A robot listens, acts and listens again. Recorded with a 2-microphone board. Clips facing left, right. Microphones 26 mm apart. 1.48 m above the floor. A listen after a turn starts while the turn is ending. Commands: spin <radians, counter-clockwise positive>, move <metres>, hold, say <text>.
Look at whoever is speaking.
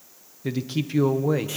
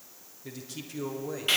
spin 0.70
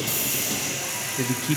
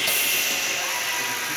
spin 1.75
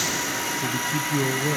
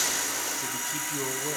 spin 0.26
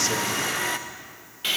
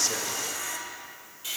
hold
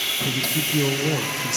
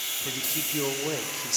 say Found it: a man speaking, straight ahead, 1 to 2 m away.